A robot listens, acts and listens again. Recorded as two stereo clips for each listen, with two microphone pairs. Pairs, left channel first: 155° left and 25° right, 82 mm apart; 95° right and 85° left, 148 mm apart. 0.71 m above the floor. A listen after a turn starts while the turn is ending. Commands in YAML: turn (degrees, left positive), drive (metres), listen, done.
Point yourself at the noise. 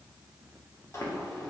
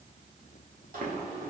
turn: 100
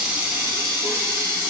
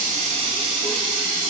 turn: 30
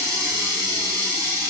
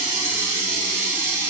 turn: 15
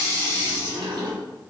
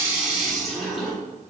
done: "Found it: a running tap, straight ahead, 1 to 2 m away."